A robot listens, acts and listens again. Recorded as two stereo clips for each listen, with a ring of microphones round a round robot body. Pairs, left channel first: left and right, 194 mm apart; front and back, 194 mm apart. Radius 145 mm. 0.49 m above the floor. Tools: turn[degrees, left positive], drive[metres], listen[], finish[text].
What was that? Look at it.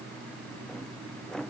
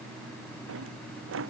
Thought: The drawer: straight behind.
Action: turn[180]
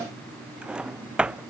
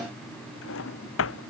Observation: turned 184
Action: finish[Facing the drawer.]